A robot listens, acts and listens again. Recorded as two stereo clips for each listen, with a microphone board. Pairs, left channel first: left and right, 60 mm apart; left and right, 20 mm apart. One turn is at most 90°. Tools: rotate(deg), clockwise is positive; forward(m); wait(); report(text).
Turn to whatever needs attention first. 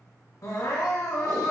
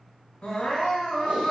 rotate(-65)
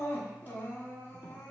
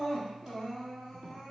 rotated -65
rotate(-30)
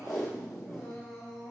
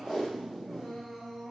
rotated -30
report("Facing the crying.")